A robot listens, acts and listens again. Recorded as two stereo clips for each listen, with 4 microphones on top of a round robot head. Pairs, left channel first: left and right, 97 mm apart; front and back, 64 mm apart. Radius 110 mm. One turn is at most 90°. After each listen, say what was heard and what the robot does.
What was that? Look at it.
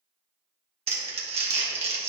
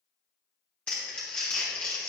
The crumpling: 75° right. Turn 75° right.
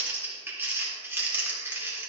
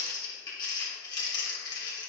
The crumpling is now 20° right. Turn 20° right.
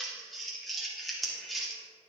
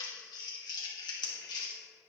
Found it: crumpling, straight ahead.